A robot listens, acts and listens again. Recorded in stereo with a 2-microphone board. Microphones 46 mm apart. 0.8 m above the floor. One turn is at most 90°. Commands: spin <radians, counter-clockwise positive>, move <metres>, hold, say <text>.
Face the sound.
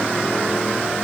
hold
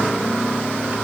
hold
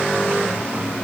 say I can't make out anything.